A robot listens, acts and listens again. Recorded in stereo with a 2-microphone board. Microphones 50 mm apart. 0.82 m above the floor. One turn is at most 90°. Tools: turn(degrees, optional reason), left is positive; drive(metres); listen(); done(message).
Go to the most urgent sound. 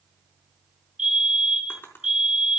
turn(degrees=-30)
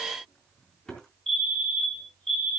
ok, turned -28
turn(degrees=15, reason="So it is at 15° left.")
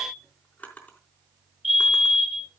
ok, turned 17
drive(metres=1.0)
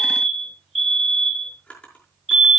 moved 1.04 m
drive(metres=1.0)
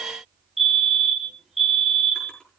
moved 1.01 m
drive(metres=1.0)
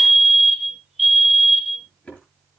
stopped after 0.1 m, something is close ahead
done("Arrived at the fire alarm, straight ahead.")